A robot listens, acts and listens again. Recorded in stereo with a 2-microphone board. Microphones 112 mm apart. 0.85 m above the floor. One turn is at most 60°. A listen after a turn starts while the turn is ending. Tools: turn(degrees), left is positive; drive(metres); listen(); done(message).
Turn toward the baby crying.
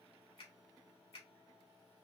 listen()
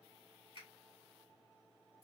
listen()
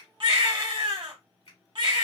turn(degrees=-50)
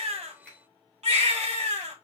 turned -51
turn(degrees=-60)
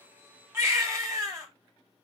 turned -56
turn(degrees=-25)
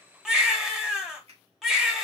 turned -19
done("Facing the baby crying.")